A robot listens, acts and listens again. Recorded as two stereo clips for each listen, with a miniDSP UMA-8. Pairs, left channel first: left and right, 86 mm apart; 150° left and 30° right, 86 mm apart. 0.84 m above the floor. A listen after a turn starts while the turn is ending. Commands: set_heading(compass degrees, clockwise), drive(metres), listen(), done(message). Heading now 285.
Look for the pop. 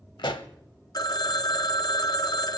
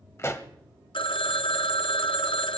set_heading(190)
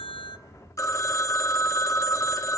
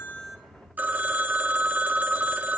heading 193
done("Facing where the pop came from. I can't hear it now.")